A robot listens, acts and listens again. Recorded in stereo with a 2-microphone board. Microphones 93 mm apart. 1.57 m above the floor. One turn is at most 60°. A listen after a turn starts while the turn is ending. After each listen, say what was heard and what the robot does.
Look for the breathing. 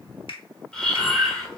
Turn 30° left.
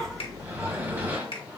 So it is at 25° right. Turn 25° right.
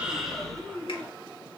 The breathing is now 10° left. Turn 10° left.
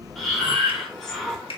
Found it: breathing, straight ahead.